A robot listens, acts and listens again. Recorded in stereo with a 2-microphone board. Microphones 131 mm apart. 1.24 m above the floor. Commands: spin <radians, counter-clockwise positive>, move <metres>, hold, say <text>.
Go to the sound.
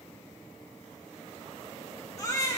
spin 0.44
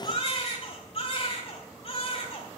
spin 2.27
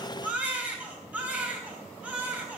spin -0.17
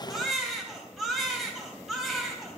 move 1.0
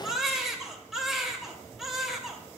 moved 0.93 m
move 1.0
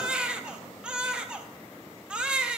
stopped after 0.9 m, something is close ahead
spin -0.17
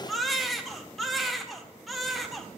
say I am next to the baby crying.